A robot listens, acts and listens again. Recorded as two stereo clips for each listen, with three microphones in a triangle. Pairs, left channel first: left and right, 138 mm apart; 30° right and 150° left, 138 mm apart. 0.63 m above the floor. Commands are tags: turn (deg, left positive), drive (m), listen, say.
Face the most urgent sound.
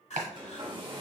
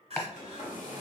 <turn deg="115"/>
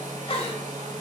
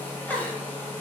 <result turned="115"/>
<turn deg="45"/>
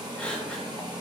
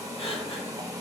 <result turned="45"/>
<turn deg="10"/>
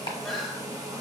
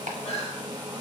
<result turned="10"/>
<say>Facing the crying, under 1 m away.</say>